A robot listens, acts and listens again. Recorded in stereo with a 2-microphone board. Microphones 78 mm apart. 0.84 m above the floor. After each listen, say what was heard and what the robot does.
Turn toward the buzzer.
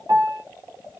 Keep listening.
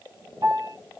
Keep listening.
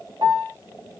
I can't make out a buzzer to turn to.